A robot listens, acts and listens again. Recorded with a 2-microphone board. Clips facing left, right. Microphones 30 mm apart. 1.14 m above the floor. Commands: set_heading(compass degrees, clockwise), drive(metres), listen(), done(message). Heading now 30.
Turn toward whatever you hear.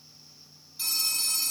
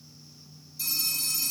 set_heading(350)
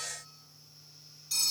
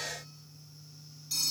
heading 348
done("Facing the phone ringing.")